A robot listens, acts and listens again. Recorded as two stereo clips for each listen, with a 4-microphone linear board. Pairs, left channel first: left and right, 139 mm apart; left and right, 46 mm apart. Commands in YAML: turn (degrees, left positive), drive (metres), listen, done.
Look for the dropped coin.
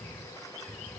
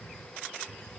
listen: true
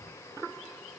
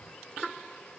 listen: true
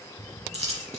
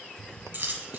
turn: -50
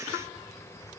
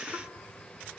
listen: true
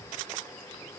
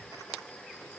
done: "I heard a dropped coin, but can't make it out now. It was about straight ahead or 80° right."